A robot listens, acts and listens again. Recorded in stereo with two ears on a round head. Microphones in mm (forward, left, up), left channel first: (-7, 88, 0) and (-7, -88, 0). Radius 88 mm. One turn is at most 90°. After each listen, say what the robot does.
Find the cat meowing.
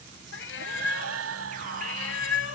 Turn 70° left.
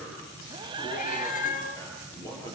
Turn 45° left.
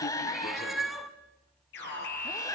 Found it: a cat meowing, straight ahead, 1 to 2 m away.